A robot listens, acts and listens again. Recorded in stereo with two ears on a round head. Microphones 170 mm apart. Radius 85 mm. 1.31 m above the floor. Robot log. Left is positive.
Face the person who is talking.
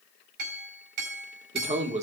note: The man speaking: about 35° right or 145° right.
cmd yaw -35
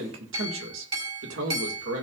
note: So it is at 100° right.
cmd yaw -100
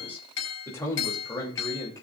note: The man speaking is now 20° left.
cmd yaw +20
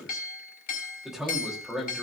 end: Found it: a man speaking, straight ahead, 2 to 4 m away.